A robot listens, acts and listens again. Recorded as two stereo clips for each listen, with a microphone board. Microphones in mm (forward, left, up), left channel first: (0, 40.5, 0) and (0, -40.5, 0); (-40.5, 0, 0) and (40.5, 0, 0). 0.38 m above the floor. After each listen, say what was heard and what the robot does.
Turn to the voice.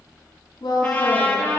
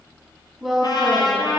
The woman speaking: 85° left. Turn 85° left.
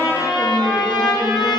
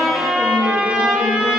Keep listening.
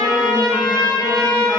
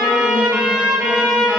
Keep listening.
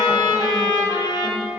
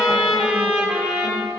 I heard a woman speaking from this way, but can't make it out now.